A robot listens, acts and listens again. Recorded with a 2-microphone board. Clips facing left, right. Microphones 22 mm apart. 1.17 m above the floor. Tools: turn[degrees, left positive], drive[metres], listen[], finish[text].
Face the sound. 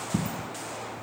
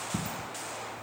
Thought: The dropped coin: about 15° right or 165° right.
Action: turn[-15]
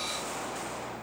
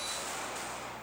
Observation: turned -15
Action: listen[]
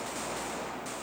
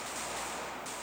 Action: finish[I heard a dropped coin, but can't make it out now. It was about straight ahead or 150° right.]